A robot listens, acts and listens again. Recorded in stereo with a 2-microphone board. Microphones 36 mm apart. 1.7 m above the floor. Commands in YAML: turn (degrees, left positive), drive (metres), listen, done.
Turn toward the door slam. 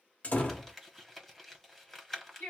turn: 40
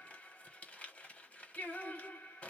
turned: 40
listen: true
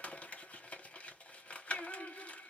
done: "I heard a door slam, but can't make it out now. It was about straight ahead or 100° left."